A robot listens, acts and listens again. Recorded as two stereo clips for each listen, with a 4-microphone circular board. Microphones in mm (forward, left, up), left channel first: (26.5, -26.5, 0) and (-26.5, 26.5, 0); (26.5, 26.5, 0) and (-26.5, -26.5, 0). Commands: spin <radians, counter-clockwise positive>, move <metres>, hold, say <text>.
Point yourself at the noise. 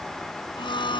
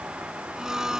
spin -0.96
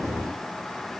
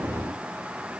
hold
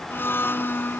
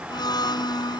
spin 0.26
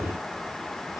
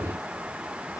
hold
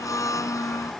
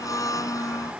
say Facing the blender.